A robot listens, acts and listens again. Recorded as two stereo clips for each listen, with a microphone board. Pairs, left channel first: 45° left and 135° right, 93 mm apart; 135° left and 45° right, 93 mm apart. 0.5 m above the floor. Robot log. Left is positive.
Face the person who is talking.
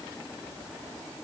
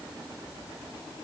cmd idle
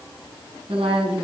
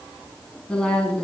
note: The woman speaking: 145° right.
cmd yaw -145
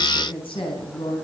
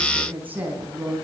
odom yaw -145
note: The woman speaking is now 25° left.
cmd yaw +25
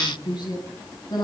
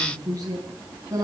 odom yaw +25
note: The woman speaking is now 10° left.
cmd yaw +10
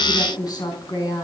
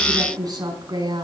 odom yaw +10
end: Facing the woman speaking.